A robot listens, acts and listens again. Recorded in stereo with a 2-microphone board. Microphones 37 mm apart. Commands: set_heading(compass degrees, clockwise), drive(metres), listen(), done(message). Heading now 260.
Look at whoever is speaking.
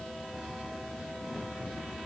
listen()
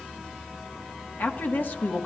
set_heading(205)
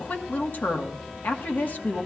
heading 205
set_heading(140)
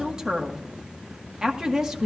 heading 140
set_heading(160)
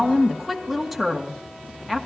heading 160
done("Facing the woman speaking, 1 to 2 m away.")